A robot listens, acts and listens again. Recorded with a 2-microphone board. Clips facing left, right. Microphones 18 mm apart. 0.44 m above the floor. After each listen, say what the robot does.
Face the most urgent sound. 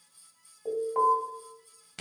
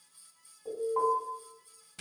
Turn 55° left.
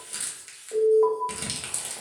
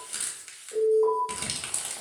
Turn 55° left.
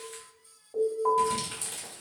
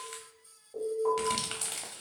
Turn 20° left.
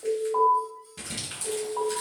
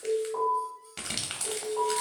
Found it: an alarm, straight ahead.